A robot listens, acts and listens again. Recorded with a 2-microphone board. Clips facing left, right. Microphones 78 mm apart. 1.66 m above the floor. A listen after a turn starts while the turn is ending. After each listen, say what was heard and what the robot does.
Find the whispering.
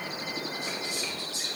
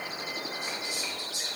The whispering: about 15° right or 165° right. Turn 15° right.
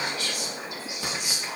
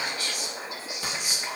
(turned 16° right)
So it is at 150° right. Turn 150° right.
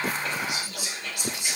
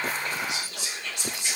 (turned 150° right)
Found it: whispering, straight ahead, 2 to 4 m away.